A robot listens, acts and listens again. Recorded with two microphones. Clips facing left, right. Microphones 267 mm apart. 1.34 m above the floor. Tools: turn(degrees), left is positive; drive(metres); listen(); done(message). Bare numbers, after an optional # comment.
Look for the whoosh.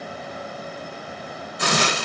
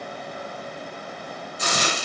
listen()
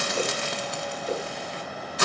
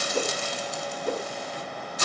# The whoosh: about 60° right or 120° right.
turn(-60)
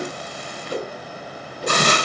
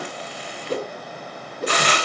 # So it is at 60° right.
turn(-60)
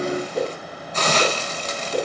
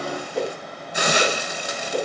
done("Found it: a whoosh, straight ahead.")